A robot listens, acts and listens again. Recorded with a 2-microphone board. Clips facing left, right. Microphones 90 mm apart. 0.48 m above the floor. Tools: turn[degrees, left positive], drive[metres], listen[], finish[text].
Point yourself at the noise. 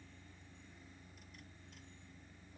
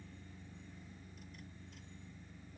Action: listen[]
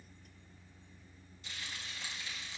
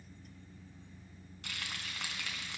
Action: turn[-90]
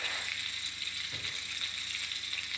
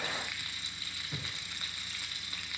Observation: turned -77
Thought: So it is at 20° right.
Action: turn[-20]
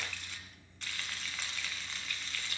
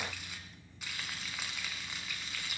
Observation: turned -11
Thought: The frying is now 10° right.
Action: turn[-10]
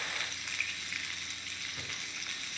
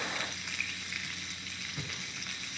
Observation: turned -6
Action: finish[Found it: frying, straight ahead, 2 to 4 m away.]